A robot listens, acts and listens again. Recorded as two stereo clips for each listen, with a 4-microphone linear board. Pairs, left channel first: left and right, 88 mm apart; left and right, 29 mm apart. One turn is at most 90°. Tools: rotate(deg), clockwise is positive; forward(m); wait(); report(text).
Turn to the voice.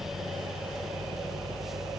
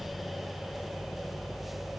wait()
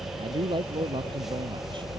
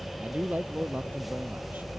rotate(75)
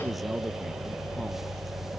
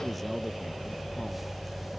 wait()
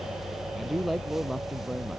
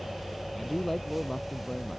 report("Facing the man speaking.")